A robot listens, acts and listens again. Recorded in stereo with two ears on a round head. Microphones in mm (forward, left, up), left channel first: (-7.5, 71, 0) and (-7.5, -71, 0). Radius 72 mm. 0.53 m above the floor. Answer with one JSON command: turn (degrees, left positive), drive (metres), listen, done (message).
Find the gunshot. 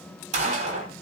{"turn": -45}
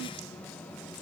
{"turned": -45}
{"listen": true}
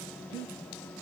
{"done": "I heard a gunshot, but can't make it out now. It was about straight ahead or 90° right."}